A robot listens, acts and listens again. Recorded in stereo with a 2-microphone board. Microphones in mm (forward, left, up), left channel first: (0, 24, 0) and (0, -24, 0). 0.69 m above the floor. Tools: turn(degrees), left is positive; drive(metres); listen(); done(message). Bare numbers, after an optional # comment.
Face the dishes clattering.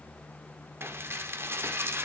# The dishes clattering: about 60° right or 120° right.
turn(-60)
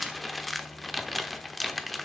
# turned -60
done("Found it: dishes clattering, straight ahead.")